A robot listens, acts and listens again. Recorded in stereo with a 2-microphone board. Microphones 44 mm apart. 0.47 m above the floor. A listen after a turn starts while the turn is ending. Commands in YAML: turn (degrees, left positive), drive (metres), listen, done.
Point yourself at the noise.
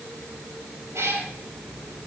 turn: -70
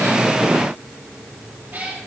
turn: -35
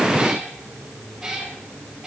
turn: -10
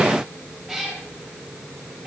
done: "Facing the cat meowing."